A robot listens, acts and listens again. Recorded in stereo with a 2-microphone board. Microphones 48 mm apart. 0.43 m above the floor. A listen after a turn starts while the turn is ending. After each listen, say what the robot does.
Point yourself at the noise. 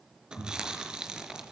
Turn 15° right.
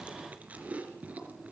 Turn 150° right.
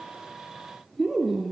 Facing the chewing, 2 to 4 m away.